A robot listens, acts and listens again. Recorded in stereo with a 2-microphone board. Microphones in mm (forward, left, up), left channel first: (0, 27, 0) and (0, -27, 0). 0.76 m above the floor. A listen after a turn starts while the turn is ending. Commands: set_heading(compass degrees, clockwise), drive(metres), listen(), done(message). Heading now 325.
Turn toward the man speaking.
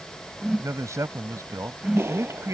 set_heading(55)
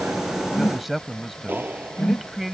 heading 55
done("Facing the man speaking.")